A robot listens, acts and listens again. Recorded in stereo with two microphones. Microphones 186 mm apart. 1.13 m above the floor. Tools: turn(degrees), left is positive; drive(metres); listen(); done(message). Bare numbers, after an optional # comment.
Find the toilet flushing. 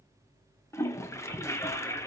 turn(30)
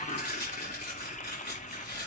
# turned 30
# So it is at 140° left.
turn(140)
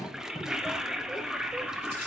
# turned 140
done("Facing the toilet flushing.")